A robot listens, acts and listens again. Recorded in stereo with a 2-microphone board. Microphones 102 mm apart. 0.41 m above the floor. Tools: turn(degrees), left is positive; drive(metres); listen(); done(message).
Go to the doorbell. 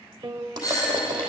turn(degrees=35)
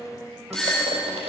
drive(metres=1.0)
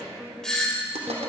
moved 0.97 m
turn(degrees=10)
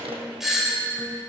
drive(metres=1.0)
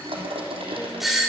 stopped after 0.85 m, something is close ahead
done("Arrived at the doorbell, straight ahead.")